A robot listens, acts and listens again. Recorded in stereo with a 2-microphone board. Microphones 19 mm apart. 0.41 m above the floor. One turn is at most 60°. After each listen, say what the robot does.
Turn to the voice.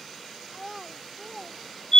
Turn 30° right.
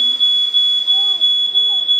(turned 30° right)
Keep listening.
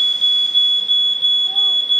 Keep listening.
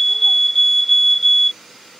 I heard a child speaking, but can't make it out now. It was about straight ahead or 120° right.